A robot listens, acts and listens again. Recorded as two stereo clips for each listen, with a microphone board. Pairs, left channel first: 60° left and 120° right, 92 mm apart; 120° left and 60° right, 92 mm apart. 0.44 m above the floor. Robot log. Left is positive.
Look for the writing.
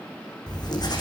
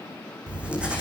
note: The writing: 20° left.
cmd yaw +20
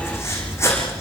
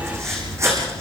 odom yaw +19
end: Found it: writing, straight ahead.